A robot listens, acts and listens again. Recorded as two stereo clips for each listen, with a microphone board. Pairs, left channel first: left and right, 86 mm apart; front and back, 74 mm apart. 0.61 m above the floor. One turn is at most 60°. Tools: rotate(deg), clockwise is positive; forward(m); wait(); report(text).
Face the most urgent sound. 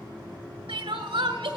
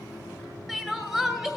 rotate(60)
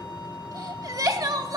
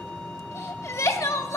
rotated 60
rotate(50)
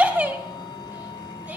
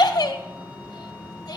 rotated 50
rotate(20)
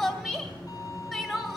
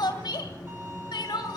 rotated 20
report("Found it: crying, straight ahead.")